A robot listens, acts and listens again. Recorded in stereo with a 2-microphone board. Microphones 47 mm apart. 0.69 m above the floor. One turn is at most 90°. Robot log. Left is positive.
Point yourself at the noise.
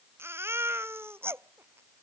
note: The baby crying: about 55° right or 125° right.
cmd yaw -55
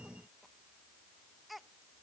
end: Found it: a baby crying, straight ahead.